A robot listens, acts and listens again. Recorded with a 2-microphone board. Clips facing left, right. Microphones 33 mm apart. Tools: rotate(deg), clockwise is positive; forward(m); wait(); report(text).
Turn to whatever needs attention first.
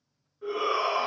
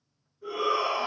rotate(-55)
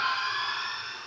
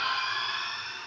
rotate(-65)
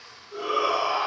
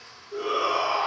rotate(-10)
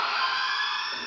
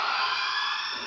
report("Facing the shout.")